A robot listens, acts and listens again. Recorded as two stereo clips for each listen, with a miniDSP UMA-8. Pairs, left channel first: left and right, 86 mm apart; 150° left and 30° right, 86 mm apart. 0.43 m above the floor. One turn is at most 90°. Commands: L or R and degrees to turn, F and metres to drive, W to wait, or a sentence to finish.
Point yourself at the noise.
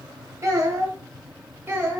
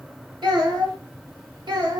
R30
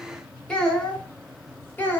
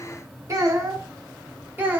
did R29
L30
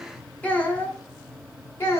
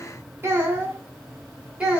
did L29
L45
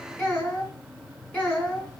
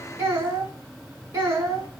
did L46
L10
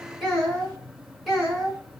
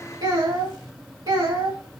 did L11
Found it: a child speaking, straight ahead.